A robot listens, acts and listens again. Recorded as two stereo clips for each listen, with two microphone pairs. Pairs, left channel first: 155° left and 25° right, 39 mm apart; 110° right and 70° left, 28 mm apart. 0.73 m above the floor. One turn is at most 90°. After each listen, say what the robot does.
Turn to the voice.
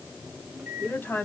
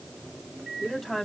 Turn 90° left.
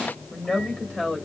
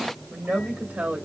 Turn 85° left.
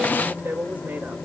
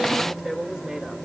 Turn 10° left.
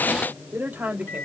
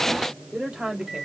Turn 10° left.
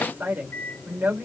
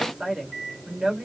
Turn 10° left.
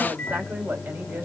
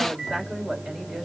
Keep listening.
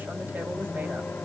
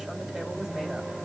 Keep listening.
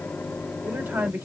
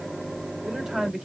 Facing the woman speaking, 2 to 4 m away.